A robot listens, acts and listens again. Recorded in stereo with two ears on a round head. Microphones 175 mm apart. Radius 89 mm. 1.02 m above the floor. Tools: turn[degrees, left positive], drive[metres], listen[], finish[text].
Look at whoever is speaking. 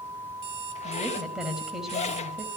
Action: turn[30]
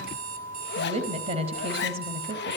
Thought: So it is at 30° right.
Action: turn[-30]
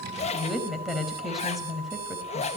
Action: finish[Found it: a woman speaking, straight ahead.]